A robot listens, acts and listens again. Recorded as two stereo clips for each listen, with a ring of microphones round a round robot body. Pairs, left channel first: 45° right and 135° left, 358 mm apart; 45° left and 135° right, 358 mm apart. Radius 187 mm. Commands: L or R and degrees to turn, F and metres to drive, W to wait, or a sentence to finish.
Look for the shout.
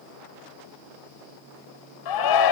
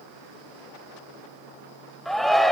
R45
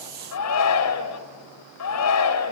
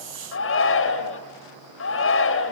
Facing the shout.